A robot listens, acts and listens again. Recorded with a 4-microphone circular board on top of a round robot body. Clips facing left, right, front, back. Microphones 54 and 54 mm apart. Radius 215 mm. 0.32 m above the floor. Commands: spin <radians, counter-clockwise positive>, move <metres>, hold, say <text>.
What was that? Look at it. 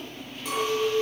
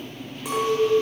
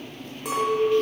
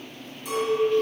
spin -0.26
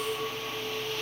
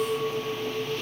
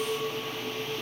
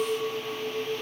say Facing the clink.